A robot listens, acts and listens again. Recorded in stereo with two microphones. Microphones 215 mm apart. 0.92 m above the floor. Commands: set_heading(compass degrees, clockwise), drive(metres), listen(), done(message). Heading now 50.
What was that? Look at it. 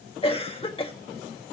set_heading(25)
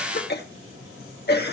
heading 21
set_heading(256)
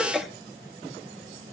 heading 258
done("Found it: a cough, straight ahead.")